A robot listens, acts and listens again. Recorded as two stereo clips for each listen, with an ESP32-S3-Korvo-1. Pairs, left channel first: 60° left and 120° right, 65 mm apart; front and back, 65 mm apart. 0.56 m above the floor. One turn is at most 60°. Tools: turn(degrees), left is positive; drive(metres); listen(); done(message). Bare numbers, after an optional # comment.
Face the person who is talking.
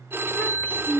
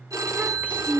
# The child speaking: 115° left.
turn(60)
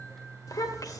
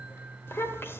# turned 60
# The child speaking is now 50° left.
turn(50)
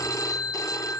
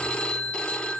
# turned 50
listen()
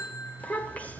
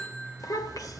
done("Facing the child speaking, 1 to 2 m away.")